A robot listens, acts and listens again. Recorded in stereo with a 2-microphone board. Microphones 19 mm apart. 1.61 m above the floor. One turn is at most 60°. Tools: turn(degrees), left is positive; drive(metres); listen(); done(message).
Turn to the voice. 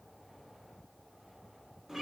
listen()
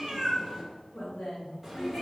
turn(degrees=60)
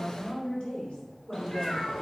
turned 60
turn(degrees=60)
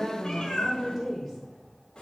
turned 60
done("Found it: a woman speaking, straight ahead.")